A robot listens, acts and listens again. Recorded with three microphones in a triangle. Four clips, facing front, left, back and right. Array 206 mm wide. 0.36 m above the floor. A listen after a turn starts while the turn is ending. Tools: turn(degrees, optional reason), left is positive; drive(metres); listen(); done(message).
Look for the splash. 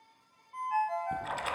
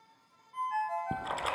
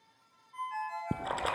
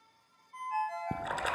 turn(degrees=-170, reason="The splash: 170° right.")
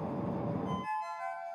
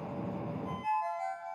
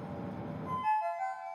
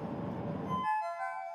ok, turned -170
done("Facing where the splash came from. I can't hear it now.")